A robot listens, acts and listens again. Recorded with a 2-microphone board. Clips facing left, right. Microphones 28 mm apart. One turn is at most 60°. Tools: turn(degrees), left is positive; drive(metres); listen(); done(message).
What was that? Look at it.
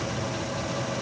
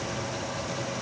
listen()
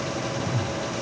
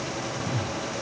turn(degrees=-50)
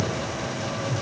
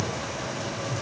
done("Found it: a whoosh, straight ahead.")